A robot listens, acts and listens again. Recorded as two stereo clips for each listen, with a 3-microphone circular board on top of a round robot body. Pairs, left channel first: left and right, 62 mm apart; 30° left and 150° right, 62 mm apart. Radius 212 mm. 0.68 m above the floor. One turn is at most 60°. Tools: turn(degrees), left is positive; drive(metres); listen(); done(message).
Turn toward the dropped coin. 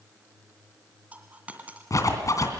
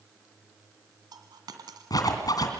turn(degrees=-60)
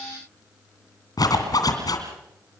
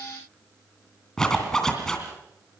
turn(degrees=-60)
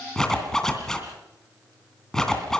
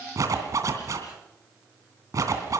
turn(degrees=-35)
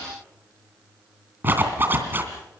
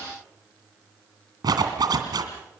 done("Facing where the dropped coin came from. I can't hear it now.")